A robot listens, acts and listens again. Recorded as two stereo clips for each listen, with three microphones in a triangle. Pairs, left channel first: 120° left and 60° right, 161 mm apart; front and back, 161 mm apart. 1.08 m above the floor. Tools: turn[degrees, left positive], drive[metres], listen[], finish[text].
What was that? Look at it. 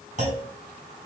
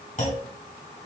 Thought: The clunk: 30° right.
Action: turn[-30]
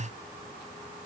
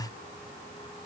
Action: finish[Facing where the clunk came from. I can't hear it now.]